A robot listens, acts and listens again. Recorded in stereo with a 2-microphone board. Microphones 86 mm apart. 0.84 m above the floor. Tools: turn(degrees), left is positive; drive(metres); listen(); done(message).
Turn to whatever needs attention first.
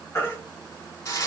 turn(degrees=30)
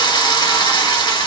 listen()
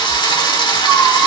listen()
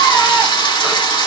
done("I heard a baby crying, but can't make it out now. It was about straight ahead or 120° left.")